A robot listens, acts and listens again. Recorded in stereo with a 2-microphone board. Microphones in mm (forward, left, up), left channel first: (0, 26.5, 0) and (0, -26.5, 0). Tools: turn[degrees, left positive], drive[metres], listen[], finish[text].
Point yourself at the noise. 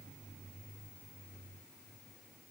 Action: listen[]
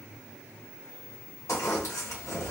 Action: turn[90]
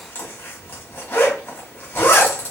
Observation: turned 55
Thought: So it is at 40° left.
Action: turn[40]
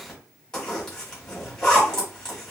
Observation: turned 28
Thought: The zipper is now 10° left.
Action: turn[10]
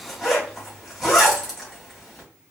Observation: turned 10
Action: finish[Found it: a zipper, straight ahead.]